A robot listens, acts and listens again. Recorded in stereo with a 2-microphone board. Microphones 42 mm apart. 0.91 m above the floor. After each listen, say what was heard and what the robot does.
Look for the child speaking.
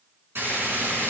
Keep listening.
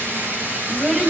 The child speaking: about 25° right or 155° right. Turn 25° right.
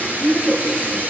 Facing the child speaking, 2 to 4 m away.